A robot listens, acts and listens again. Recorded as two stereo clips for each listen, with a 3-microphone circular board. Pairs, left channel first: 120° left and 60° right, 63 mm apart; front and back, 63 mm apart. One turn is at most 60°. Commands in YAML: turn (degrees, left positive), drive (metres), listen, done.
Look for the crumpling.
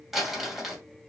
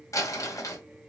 turn: 30
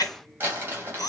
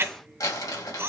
done: "Facing the crumpling, 1 to 2 m away."